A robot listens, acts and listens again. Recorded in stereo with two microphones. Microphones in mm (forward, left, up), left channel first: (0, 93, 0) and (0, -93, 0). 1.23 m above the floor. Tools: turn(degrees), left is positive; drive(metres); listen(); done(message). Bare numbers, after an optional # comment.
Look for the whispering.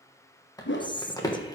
# The whispering: about 25° left or 155° left.
turn(25)
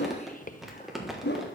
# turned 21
# So it is at 135° left.
turn(135)
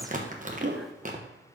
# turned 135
listen()
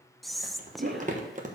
done("Facing the whispering.")